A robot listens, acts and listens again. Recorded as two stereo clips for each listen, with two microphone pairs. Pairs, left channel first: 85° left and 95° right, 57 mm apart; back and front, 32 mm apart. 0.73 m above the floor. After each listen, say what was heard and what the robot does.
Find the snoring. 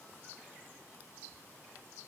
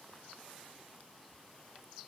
Keep listening.
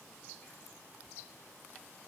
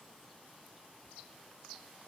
Keep listening.
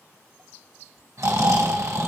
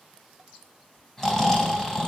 The snoring: 105° right. Turn 105° right.
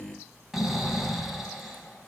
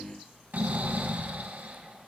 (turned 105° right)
The snoring is now 15° right. Turn 15° right.
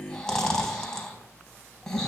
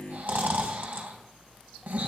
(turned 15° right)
Facing the snoring, 2 to 4 m away.